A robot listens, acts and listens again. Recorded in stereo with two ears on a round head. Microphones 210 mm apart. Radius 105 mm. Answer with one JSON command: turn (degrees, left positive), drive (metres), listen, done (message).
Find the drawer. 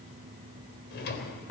{"turn": 45}
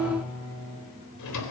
{"turn": 90}
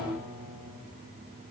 {"listen": true}
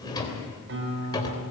{"turn": 20}
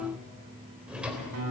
{"done": "Facing the drawer, 2 to 4 m away."}